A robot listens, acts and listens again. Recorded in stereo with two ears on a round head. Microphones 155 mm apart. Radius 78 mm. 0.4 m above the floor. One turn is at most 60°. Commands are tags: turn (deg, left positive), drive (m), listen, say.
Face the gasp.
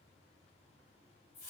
<listen/>
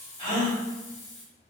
<turn deg="30"/>
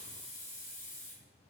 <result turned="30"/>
<listen/>
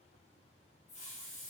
<say>I heard a gasp, but can't make it out now. It was about straight ahead or 120° left.</say>